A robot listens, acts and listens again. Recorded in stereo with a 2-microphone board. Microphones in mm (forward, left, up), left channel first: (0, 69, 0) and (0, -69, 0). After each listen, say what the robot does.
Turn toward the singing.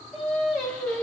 Turn 30° left.
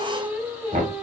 Turn 10° right.
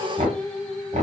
Facing the singing, 1 to 2 m away.